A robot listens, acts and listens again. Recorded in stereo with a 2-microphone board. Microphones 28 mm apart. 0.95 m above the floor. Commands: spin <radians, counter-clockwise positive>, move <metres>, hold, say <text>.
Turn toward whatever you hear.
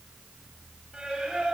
spin -0.52
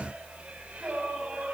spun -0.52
spin -2.09
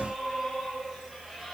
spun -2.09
say Found it: singing, straight ahead.